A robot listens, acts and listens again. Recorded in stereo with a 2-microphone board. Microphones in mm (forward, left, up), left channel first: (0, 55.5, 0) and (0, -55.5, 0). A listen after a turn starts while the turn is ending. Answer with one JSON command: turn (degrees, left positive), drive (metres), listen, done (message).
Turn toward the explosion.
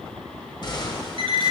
{"turn": 45}
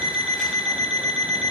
{"listen": true}
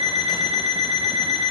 {"done": "I heard an explosion, but can't make it out now. It was about straight ahead or 90° left."}